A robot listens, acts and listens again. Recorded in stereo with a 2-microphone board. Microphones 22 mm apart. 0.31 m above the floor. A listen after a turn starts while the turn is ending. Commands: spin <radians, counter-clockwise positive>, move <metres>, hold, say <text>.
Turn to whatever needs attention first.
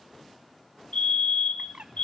spin 1.05
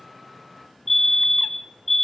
spin 0.17
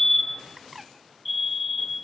say Facing the fire alarm, over 4 m away.